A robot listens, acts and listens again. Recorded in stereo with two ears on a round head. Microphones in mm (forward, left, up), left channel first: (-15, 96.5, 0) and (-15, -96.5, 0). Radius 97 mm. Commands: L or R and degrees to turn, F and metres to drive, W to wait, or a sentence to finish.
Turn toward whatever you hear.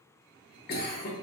L50
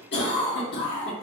L70
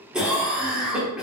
Facing the cough.